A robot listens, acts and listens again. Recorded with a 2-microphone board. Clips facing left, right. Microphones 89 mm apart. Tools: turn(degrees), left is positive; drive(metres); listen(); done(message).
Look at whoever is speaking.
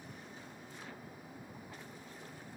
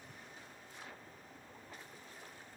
listen()
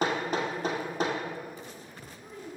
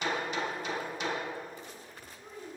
turn(degrees=-30)
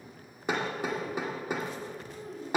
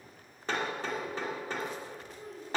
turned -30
turn(degrees=45)
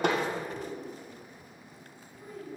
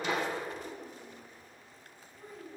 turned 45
done("Found it: a child speaking, straight ahead, 2 to 4 m away.")